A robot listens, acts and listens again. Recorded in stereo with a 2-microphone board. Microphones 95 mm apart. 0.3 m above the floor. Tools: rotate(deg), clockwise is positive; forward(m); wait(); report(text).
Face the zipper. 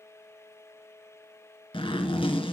rotate(-70)
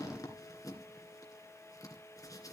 rotate(-40)
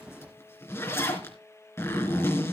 rotate(-30)
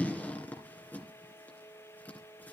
rotate(-20)
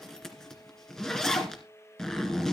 report("Found it: a zipper, straight ahead.")